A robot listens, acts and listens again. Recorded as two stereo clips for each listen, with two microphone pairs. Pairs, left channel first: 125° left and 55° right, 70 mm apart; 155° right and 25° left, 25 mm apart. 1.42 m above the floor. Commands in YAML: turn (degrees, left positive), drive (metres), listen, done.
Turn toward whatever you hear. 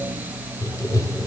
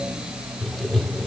turn: 130
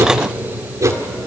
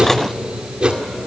turn: -25
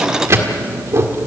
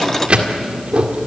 turn: -15
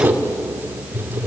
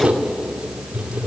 done: "Facing the writing, 1 to 2 m away."